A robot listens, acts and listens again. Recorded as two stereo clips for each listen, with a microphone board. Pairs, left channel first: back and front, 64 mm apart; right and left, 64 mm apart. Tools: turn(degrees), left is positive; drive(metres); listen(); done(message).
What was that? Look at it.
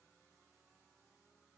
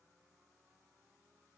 listen()
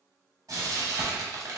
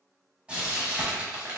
turn(degrees=20)
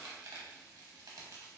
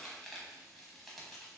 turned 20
listen()
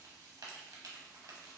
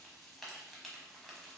done("Facing the frying.")